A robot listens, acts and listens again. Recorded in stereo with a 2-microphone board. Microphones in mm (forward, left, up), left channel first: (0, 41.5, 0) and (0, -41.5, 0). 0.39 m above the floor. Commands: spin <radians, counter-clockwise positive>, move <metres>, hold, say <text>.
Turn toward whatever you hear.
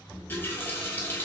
spin 0.44
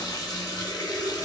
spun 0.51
spin 2.09
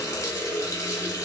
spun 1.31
spin 0.79
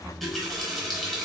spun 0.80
say Facing the running tap.